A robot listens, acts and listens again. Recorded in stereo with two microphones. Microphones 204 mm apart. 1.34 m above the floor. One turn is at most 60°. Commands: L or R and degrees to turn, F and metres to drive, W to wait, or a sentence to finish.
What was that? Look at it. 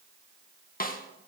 L45
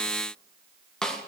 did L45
Found it: a snare drum, straight ahead, 1 to 2 m away.